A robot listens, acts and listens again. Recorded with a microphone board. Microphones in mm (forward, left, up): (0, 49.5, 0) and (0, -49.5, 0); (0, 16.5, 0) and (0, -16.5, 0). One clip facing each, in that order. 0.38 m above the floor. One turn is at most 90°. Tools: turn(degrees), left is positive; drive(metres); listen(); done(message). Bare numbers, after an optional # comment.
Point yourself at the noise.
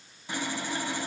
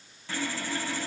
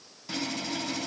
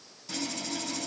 # The sawing: about 20° left or 160° left.
turn(20)
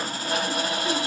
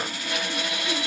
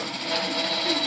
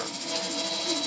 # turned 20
# So it is at 140° left.
turn(90)
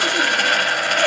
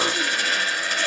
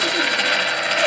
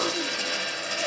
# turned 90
# The sawing is now 70° left.
turn(70)
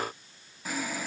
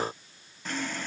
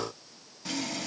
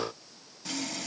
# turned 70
done("Facing the sawing.")